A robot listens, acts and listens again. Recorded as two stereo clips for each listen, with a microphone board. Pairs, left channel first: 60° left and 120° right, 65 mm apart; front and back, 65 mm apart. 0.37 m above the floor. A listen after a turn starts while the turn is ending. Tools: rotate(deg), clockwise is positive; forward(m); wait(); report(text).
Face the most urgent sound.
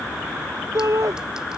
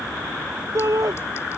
rotate(150)
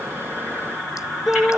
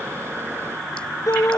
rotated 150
rotate(40)
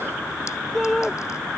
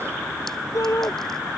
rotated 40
rotate(25)
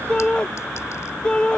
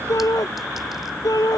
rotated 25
rotate(15)
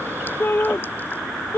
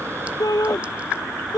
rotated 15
report("Found it: a shout, straight ahead.")